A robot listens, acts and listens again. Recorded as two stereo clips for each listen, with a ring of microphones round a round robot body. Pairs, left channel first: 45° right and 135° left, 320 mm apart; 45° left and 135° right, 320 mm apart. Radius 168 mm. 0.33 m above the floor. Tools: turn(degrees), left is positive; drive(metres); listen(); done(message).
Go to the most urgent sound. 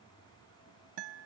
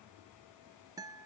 listen()
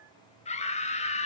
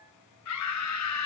turn(degrees=20)
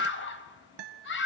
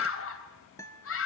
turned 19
drive(metres=1.0)
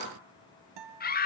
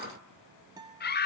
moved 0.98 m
drive(metres=1.0)
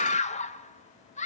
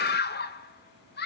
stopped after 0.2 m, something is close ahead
turn(degrees=10)
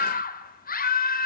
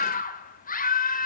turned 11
done("Arrived at the scream, straight ahead.")